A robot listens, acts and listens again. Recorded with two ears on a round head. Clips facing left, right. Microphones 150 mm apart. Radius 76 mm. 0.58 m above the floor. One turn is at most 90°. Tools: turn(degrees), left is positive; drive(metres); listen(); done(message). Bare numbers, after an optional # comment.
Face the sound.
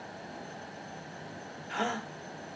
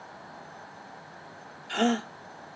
# The gasp: about 35° right or 145° right.
turn(-35)
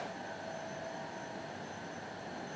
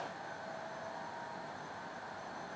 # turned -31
listen()
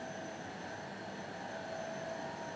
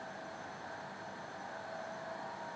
done("I heard a gasp, but can't make it out now. It was about 5° right or 110° right.")